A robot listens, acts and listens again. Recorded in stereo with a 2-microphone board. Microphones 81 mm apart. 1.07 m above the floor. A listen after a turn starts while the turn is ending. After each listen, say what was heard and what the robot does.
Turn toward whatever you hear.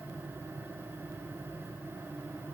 Keep listening.
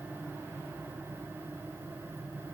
Keep listening.
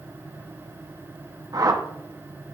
The whoosh: about 50° right or 130° right. Turn 50° right.
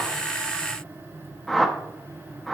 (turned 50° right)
Facing the whoosh, under 1 m away.